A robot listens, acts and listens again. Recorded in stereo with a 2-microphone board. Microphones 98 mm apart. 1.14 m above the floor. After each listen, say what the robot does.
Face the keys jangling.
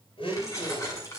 Turn 35° left.
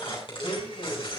Turn 115° left.
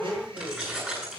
Turn 15° right.
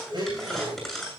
Found it: keys jangling, straight ahead, over 4 m away.